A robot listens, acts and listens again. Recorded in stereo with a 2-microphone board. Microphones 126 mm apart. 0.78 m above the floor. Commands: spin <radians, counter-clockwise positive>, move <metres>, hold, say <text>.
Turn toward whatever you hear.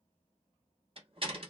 spin -0.79
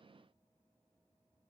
hold
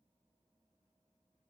say I heard a door slam, but can't make it out now. It was about straight ahead or 90° right.